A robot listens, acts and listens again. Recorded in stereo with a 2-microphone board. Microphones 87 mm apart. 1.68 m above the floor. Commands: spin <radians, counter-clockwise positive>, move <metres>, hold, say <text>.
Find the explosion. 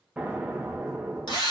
spin -0.52
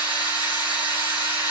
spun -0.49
hold
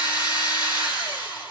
say I heard an explosion, but can't make it out now. It was about 15° left or 140° right.